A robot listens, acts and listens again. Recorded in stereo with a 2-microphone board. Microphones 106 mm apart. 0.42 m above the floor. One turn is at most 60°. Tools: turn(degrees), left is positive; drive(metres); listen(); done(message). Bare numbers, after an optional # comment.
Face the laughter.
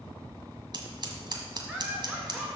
turn(30)
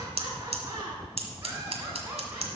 # So it is at 20° right.
turn(-20)
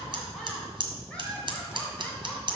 # The laughter is now 10° left.
turn(10)
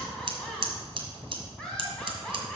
done("Found it: laughter, straight ahead, 2 to 4 m away.")